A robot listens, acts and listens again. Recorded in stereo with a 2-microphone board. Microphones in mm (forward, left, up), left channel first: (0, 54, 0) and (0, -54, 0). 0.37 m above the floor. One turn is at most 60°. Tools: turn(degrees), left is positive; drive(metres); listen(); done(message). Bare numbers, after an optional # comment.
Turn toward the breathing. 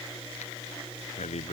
turn(60)
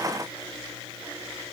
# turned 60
# Nothing new. It was at 30° left.
turn(30)
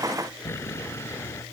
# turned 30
# The breathing is now 25° left.
turn(25)
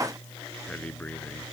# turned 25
# The breathing is now 15° left.
turn(15)
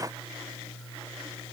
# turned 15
listen()
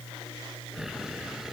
done("Found it: breathing, straight ahead.")